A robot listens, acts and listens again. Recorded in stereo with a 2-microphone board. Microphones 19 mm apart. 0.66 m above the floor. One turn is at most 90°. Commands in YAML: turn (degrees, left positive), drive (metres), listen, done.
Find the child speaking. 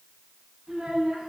turn: -90
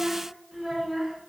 done: "Facing the child speaking, over 4 m away."